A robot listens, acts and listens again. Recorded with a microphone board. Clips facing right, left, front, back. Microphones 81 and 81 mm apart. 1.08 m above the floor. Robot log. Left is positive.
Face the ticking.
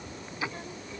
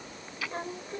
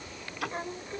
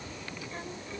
note: The ticking: 25° right.
cmd yaw -25
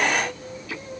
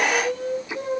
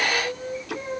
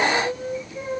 note: The ticking is now 15° left.
cmd yaw +15
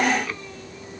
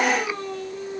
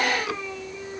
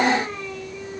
cmd idle
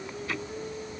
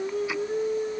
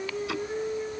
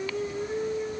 cmd idle
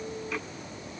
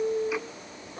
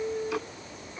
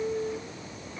end: Facing where the ticking came from. I can't hear it now.